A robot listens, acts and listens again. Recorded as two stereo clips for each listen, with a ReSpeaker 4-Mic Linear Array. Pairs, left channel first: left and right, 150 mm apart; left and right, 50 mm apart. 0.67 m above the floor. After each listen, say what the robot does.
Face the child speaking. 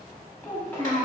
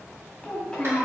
Turn 30° left.
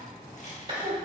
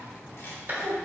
Turn 15° right.
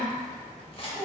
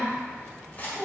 Facing the child speaking, 1 to 2 m away.